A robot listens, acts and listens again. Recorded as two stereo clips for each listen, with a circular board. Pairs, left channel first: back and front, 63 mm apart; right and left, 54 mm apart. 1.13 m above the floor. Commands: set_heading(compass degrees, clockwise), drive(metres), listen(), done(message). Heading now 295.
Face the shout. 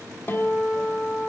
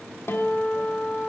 listen()
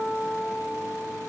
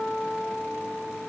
listen()
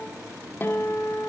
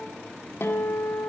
done("I can't make out a shout, only a guitar.")